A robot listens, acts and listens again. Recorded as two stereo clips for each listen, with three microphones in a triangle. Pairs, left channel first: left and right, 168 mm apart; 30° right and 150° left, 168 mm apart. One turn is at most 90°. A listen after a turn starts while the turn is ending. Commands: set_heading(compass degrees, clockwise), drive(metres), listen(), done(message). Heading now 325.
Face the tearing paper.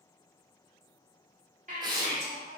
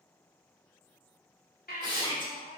set_heading(55)
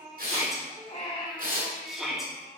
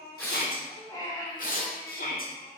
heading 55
set_heading(115)
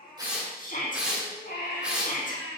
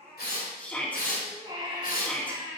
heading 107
done("Facing the tearing paper.")